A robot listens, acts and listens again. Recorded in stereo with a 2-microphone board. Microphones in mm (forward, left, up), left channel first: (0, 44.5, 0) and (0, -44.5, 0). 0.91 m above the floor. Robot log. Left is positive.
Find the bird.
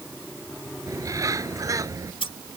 note: The bird: about 40° right or 140° right.
cmd yaw -40
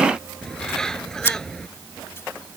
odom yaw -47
end: Found it: a bird, straight ahead.